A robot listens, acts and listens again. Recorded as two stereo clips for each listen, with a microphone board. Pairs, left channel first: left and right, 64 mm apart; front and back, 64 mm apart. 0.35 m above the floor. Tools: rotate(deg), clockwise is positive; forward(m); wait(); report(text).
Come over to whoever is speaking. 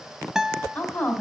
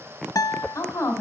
rotate(-25)
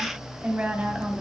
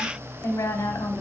rotate(25)
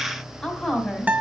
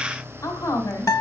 rotate(-10)
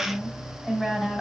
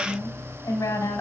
forward(1.0)
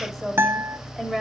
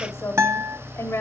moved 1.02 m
forward(1.0)
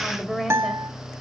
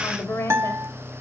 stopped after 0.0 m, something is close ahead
report("Arrived at the woman speaking, straight ahead.")